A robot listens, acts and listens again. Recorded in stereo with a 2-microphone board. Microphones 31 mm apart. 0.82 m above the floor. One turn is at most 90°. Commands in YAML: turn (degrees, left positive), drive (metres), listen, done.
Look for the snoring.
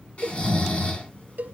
turn: 45
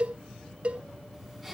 done: "Found it: snoring, straight ahead."